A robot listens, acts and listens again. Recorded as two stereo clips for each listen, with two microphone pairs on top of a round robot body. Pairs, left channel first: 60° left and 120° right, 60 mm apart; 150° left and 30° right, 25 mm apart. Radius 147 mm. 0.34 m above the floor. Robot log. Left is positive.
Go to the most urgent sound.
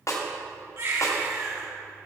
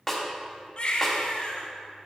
note: The baby crying: 160° right.
cmd yaw -160
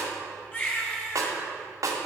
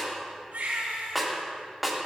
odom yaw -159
cmd fwd 1.0
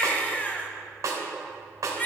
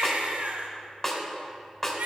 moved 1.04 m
cmd fwd 1.0
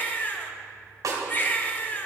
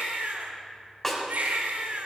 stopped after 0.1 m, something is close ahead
end: Arrived at the baby crying, straight ahead.